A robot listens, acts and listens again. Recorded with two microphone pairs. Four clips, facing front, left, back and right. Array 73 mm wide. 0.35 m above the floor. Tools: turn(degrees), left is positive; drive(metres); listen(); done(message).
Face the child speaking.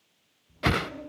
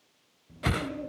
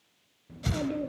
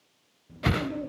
turn(degrees=-170)
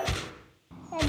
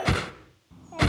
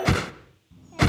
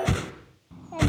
turn(degrees=-15)
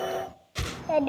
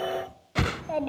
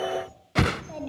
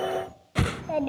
done("Facing the child speaking, 1 to 2 m away.")